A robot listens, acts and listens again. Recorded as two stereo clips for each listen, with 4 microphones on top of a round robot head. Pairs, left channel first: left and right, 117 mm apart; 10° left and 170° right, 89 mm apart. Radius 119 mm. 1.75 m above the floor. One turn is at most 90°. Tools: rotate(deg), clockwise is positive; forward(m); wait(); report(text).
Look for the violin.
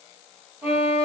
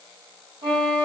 rotate(90)
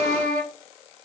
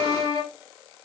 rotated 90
rotate(90)
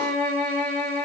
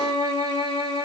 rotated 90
rotate(-10)
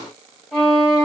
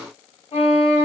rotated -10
report("Found it: a violin, straight ahead.")